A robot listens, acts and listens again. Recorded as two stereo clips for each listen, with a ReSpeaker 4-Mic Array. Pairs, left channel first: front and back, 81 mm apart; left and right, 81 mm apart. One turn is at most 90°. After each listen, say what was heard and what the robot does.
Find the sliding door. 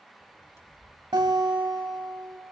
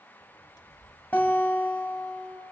The sliding door: 125° left. Turn 90° left.
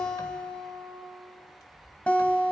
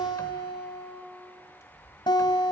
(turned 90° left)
The sliding door is now 40° left. Turn 40° left.
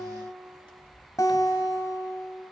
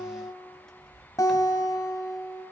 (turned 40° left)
The sliding door is now 10° left. Turn 10° left.
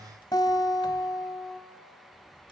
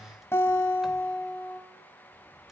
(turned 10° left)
Keep listening.
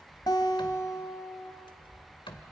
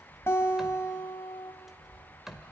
Facing the sliding door.